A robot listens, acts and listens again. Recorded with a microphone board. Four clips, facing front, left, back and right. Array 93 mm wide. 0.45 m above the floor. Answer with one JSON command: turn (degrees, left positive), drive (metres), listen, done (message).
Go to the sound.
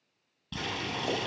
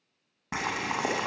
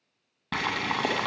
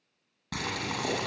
{"turn": 155}
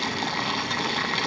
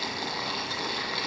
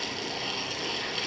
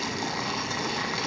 {"turn": -10}
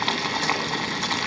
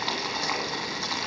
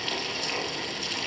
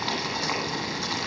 {"drive": 1.0}
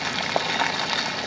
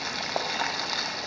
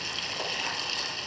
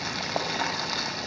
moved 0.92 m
{"drive": 1.0}
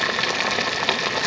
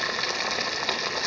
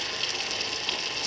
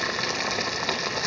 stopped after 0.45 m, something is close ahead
{"done": "Arrived at the boiling, straight ahead."}